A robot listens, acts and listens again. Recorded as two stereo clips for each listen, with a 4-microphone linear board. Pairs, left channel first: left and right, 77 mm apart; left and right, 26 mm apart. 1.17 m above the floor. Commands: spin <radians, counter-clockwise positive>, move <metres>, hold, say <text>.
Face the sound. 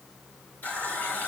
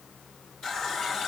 spin 0.35
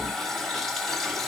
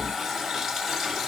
say Facing the running tap.